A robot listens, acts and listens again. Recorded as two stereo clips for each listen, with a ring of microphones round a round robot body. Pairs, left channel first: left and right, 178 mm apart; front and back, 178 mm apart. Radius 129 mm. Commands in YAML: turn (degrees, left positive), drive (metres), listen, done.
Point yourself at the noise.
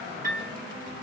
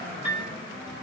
turn: -60
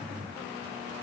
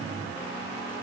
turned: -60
listen: true
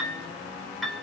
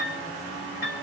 done: "Found it: a piano, straight ahead, 1 to 2 m away."